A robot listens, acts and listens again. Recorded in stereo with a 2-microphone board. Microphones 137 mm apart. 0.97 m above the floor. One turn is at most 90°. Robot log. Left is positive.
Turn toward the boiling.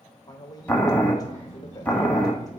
cmd yaw +30
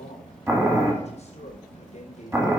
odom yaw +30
note: So it is at 20° right.
cmd yaw -20
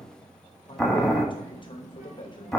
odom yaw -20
end: Facing the boiling.